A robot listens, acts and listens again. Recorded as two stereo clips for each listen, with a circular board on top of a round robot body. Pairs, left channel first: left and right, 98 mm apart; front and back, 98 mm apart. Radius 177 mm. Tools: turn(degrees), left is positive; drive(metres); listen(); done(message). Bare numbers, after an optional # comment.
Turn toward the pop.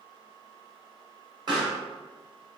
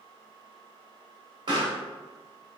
# The pop: 140° right.
turn(-140)
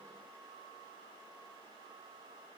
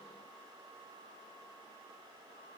done("I heard a pop from this way, but can't make it out now.")